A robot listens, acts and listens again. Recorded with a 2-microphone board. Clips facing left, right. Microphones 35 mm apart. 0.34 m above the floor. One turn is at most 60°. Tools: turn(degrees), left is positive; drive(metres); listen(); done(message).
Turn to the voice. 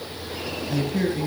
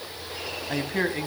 turn(degrees=-40)
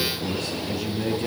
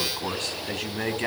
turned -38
turn(degrees=-60)
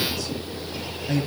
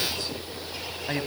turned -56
turn(degrees=-40)
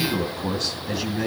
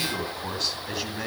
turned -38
done("Facing the man speaking, 2 to 4 m away.")